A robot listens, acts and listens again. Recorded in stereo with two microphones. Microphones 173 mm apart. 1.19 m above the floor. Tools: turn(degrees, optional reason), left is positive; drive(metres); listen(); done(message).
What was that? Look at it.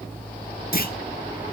turn(degrees=60, reason="The clunk: about 60° left or 120° left.")
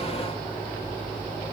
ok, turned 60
listen()
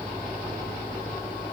done("I heard a clunk, but can't make it out now. It was about straight ahead or 60° left.")